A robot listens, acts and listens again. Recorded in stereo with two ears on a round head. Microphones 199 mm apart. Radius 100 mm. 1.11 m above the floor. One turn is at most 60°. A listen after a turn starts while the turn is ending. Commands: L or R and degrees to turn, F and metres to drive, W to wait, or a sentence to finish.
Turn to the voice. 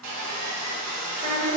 R30
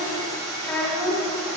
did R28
L15
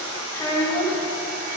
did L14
L25
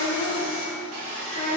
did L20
L35
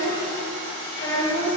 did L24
L20
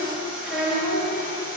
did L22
Found it: a child speaking, straight ahead, 1 to 2 m away.